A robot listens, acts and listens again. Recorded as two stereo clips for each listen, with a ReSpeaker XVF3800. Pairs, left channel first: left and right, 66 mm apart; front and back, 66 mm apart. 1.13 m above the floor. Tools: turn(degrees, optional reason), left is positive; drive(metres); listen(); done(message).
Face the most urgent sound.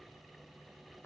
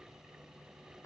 listen()
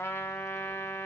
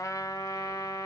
listen()
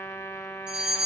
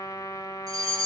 turn(degrees=-165, reason="The fire alarm: 165° right.")
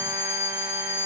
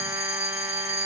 turn(degrees=35, reason="The fire alarm is now 35° left.")
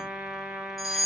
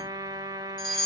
done("Facing the fire alarm.")